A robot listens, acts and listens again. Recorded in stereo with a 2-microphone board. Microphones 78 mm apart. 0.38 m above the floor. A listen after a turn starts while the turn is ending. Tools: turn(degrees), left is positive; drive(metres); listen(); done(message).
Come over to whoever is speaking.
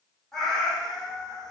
listen()
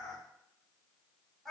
listen()
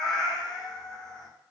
done("I can't make out anyone speaking to turn to.")